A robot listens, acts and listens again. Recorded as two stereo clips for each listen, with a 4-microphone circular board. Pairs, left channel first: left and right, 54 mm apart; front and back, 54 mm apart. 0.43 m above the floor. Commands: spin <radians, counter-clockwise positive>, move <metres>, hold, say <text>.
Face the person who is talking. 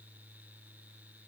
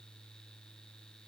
hold
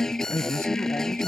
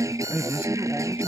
spin 2.09
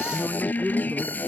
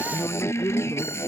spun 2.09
spin -0.44
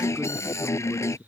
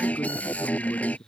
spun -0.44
hold
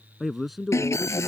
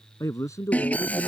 say Found it: a man speaking, straight ahead.